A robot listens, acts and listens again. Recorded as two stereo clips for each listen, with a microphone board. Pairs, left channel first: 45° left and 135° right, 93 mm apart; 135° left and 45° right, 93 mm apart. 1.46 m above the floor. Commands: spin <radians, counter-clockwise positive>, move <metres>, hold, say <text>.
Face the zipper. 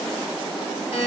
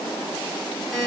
hold
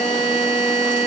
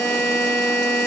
hold
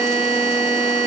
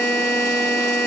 say I can't make out a zipper to turn to.